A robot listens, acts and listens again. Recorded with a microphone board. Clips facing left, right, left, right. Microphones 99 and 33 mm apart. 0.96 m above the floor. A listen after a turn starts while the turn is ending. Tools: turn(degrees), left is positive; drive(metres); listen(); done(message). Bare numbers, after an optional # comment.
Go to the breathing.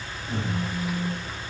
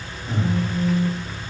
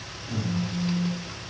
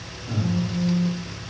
# The breathing: about 25° right or 155° right.
turn(-25)
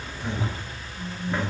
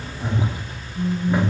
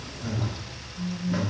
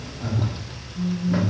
# So it is at 135° right.
turn(-135)
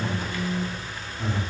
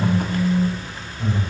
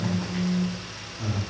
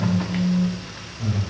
drive(1.0)
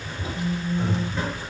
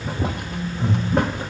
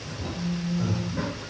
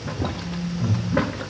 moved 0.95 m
drive(1.0)
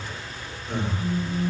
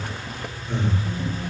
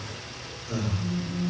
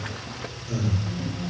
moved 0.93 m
# The breathing is now 10° left.
turn(10)
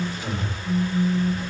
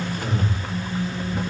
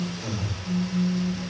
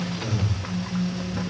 drive(1.0)
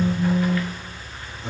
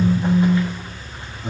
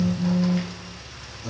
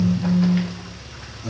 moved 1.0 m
drive(1.0)
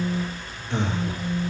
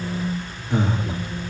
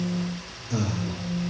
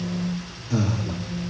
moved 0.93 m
# The breathing is now 10° right.
turn(-10)
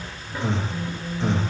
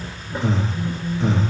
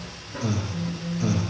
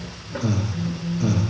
drive(1.0)
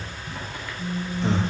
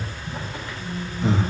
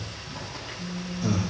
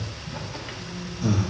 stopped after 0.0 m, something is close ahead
done("Arrived at the breathing, straight ahead.")